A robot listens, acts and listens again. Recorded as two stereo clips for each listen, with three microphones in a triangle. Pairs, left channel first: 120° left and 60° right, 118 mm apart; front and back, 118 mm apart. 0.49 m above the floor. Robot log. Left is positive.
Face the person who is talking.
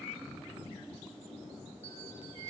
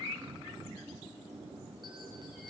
cmd idle
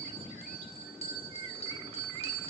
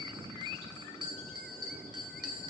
cmd idle
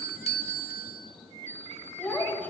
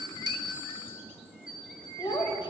note: The child speaking: 45° left.
cmd yaw +45
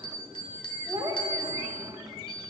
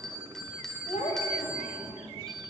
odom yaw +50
end: Facing the child speaking, 1 to 2 m away.